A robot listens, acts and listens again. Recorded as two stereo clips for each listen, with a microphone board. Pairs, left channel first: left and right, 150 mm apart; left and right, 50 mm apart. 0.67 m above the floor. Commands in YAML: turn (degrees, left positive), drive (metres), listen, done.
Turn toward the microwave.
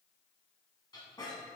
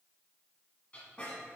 listen: true
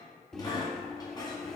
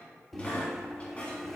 turn: 30
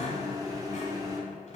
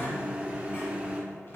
turn: -25
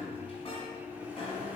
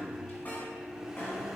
turn: -10
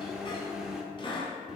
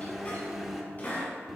done: "Found it: a microwave, straight ahead, 1 to 2 m away."